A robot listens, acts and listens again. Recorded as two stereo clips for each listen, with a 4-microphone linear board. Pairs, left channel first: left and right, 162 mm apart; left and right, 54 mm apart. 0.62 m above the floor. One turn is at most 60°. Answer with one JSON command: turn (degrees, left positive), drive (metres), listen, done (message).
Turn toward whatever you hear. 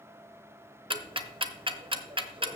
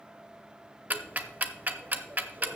{"turn": -35}
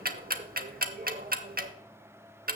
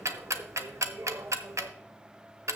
{"turn": -60}
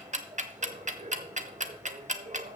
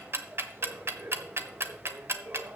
{"turn": -50}
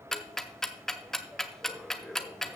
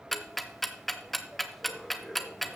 {"done": "Facing the ticking, under 1 m away."}